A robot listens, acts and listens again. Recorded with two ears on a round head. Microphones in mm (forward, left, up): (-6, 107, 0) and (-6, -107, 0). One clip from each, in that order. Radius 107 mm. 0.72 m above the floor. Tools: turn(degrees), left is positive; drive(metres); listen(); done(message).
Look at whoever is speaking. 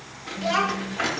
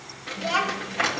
turn(degrees=20)
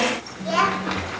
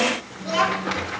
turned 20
turn(degrees=145)
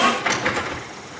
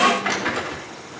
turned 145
listen()
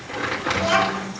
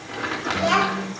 turn(degrees=-30)
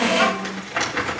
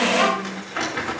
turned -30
turn(degrees=-15)
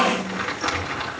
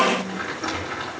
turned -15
listen()
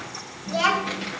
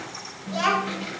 done("Facing the child speaking, 1 to 2 m away.")